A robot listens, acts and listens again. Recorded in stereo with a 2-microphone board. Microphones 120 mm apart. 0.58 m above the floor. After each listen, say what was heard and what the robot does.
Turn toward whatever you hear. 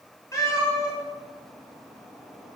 The cat meowing: about 30° left or 150° left. Turn 30° left.
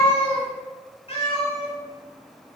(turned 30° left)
So it is at 120° left. Turn 120° left.
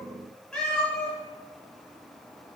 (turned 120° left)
Found it: a cat meowing, straight ahead, 2 to 4 m away.